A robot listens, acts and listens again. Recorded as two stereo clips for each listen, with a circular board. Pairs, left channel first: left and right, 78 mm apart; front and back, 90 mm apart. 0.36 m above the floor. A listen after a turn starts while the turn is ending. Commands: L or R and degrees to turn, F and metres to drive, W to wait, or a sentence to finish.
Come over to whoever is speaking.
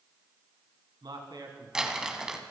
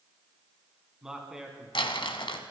R100
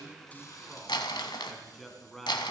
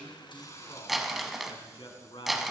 F1.0
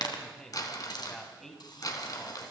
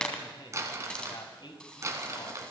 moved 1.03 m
F1.0
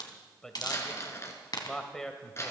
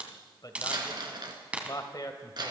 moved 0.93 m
L10
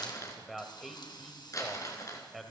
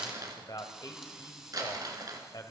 F1.0
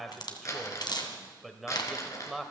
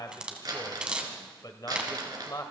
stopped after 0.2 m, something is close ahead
Arrived at the man speaking, straight ahead.